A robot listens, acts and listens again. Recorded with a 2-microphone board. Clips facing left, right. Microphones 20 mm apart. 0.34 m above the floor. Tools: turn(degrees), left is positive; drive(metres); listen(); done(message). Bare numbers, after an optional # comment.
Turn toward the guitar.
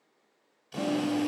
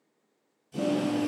# The guitar: about 25° left or 155° left.
turn(25)
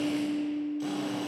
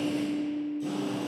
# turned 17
# So it is at 140° left.
turn(140)
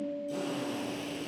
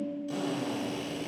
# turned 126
# The guitar is now 15° left.
turn(15)
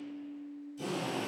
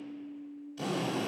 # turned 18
done("Found it: a guitar, straight ahead.")